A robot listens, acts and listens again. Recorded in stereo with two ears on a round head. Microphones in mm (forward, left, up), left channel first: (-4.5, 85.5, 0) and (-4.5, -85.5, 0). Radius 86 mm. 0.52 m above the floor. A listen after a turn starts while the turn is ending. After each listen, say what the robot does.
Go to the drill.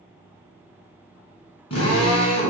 Turn 30° left.
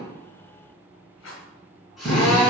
Drive 1.0 m forward.
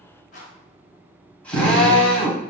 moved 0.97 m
Drive 1.0 m forward.
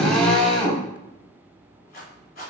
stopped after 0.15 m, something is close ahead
Arrived at the drill, straight ahead.